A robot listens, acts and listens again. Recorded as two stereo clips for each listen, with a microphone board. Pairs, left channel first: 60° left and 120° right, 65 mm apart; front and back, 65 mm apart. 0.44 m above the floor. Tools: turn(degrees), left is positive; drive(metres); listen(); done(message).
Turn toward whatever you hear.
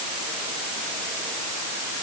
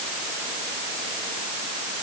listen()
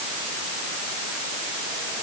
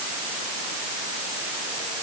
listen()
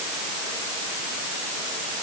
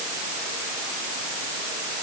done("I can't make out anything to turn to.")